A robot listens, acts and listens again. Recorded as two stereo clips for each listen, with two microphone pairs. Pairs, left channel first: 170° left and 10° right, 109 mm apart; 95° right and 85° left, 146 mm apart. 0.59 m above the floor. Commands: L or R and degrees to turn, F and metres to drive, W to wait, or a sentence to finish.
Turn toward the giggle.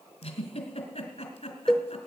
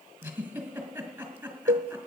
L160
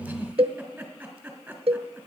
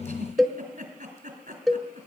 L70
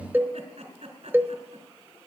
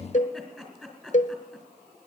Found it: a giggle, straight ahead, 2 to 4 m away.